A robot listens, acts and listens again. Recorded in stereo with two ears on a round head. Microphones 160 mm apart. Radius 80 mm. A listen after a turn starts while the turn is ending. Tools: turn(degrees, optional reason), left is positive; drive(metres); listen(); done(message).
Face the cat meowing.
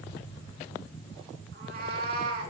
turn(degrees=-55, reason="The cat meowing: about 55° right or 125° right.")
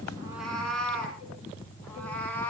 turn(degrees=10, reason="So it is at 10° left.")
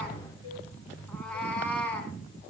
turn(degrees=10, reason="The cat meowing is now 10° left.")
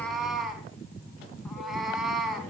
done("Found it: a cat meowing, straight ahead, 2 to 4 m away.")